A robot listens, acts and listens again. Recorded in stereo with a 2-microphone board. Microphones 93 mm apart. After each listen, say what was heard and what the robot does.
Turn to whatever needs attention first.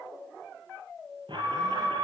The alarm: about 60° right or 120° right. Turn 60° right.
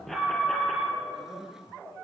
Facing the alarm, over 4 m away.